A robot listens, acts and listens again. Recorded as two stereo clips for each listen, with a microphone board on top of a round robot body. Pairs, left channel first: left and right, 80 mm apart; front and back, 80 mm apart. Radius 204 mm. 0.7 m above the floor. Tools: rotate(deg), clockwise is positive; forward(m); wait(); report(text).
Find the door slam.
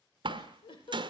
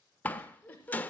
rotate(70)
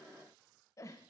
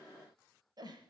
report("I heard a door slam from this way, but can't make it out now.")